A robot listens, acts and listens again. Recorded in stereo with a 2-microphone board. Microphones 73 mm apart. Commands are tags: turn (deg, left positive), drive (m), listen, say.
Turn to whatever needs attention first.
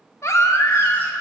<turn deg="45"/>
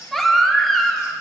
<say>Found it: a baby crying, straight ahead, under 1 m away.</say>